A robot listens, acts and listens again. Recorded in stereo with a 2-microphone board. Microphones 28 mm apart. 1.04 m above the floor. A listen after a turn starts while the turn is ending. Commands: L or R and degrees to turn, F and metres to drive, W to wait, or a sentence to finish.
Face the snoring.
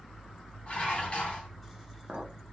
W
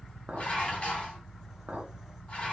W
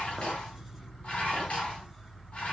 I can't make out snoring to turn to.